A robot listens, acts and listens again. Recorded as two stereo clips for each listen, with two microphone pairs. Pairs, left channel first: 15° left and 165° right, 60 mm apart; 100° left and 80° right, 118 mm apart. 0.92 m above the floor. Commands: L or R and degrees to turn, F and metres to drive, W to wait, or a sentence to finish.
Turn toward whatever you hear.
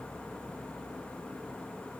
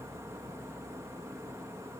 W
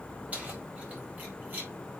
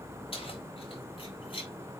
L135
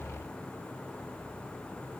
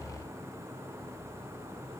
W
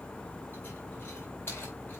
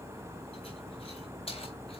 L65
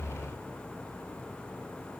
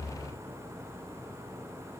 W
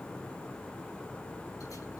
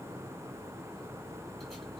W
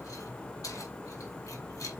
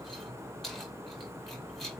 L10
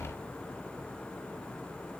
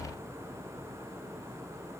W
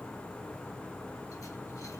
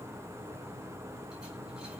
W
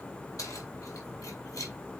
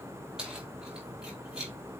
Found it: keys jangling, straight ahead, over 4 m away.